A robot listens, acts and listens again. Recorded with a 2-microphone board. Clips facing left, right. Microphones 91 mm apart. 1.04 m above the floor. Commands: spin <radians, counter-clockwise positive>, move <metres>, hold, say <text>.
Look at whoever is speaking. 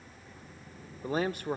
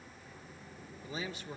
spin 1.05
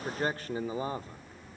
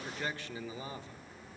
spin 0.87
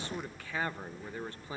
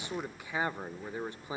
spin -0.35
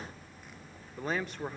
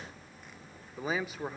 say Found it: a man speaking, straight ahead, 1 to 2 m away.